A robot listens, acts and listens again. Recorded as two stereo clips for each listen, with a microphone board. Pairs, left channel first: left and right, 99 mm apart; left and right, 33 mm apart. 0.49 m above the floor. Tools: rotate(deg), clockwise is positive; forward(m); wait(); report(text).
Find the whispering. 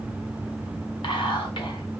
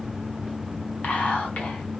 rotate(-55)
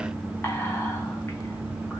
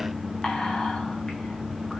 rotate(-30)
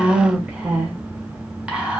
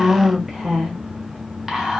rotate(15)
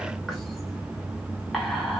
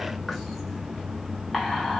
report("Facing the whispering, 1 to 2 m away.")